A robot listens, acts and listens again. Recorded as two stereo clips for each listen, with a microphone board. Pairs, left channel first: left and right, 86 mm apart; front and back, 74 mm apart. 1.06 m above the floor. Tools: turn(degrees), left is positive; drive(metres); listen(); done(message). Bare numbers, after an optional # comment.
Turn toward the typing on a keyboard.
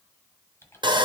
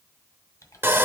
# The typing on a keyboard: 35° left.
turn(35)
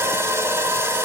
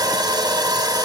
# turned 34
listen()
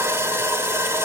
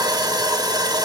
listen()
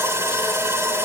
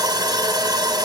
done("Facing where the typing on a keyboard came from. I can't hear it now.")